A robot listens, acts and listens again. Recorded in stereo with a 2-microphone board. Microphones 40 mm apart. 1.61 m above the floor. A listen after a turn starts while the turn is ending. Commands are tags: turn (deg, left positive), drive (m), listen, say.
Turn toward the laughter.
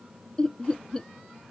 <turn deg="25"/>
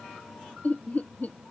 <turn deg="130"/>
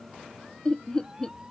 <turn deg="25"/>
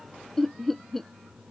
<say>Found it: laughter, straight ahead.</say>